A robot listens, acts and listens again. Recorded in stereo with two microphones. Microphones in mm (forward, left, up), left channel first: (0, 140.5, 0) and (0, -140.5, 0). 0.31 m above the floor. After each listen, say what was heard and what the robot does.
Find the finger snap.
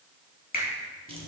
The finger snap: about 30° left or 150° left. Turn 30° left.
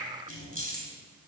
Keep listening.
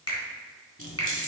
So it is at 115° left. Turn 115° left.
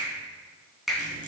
Found it: a finger snap, straight ahead, 2 to 4 m away.